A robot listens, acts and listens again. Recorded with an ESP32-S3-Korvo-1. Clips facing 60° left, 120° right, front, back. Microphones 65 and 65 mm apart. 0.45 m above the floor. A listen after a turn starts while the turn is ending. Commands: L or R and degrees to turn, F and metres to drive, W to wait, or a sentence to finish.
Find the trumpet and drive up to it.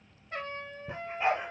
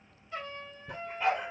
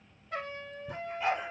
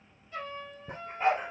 L20
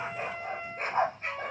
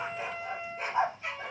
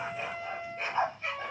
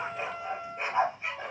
F1.0
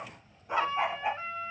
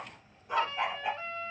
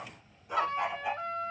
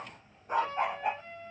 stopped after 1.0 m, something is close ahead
R10
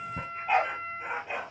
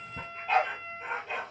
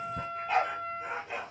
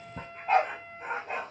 Arrived at the trumpet, straight ahead.